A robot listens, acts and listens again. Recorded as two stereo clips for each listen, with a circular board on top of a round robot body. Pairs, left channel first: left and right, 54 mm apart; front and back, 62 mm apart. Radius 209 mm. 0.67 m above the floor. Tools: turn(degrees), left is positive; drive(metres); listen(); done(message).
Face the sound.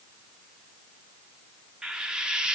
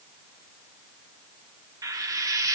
turn(degrees=-165)
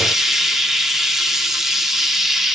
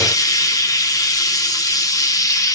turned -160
done("Facing the frying.")